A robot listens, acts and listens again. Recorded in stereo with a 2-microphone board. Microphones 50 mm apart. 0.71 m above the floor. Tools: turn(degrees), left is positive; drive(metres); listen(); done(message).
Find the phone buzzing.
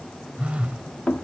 turn(degrees=-25)
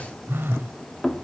turn(degrees=-130)
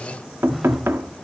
done("Facing the phone buzzing, 1 to 2 m away.")